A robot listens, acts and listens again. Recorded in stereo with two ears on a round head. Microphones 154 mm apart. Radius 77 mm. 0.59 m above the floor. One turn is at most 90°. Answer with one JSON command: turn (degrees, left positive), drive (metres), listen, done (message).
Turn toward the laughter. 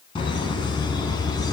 {"turn": 25}
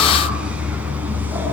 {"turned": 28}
{"turn": -10}
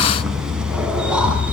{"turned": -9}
{"done": "Found it: laughter, straight ahead."}